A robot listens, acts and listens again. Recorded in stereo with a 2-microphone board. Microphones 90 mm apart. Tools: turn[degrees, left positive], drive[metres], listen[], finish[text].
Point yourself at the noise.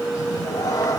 Thought: The cat meowing: about 45° left or 135° left.
Action: turn[45]
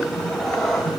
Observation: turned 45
Action: finish[Facing the cat meowing, 2 to 4 m away.]